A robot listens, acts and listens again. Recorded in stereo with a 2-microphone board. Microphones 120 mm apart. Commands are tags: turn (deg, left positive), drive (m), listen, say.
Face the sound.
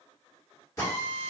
<turn deg="25"/>
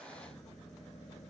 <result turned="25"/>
<listen/>
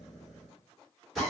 <say>Found it: a drill, straight ahead, 1 to 2 m away.</say>